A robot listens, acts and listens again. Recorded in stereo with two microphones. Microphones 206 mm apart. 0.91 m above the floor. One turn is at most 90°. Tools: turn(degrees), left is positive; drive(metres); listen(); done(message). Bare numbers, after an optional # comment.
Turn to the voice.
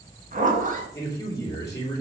# The man speaking: about 15° left or 165° left.
turn(15)
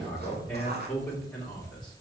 done("Found it: a man speaking, straight ahead.")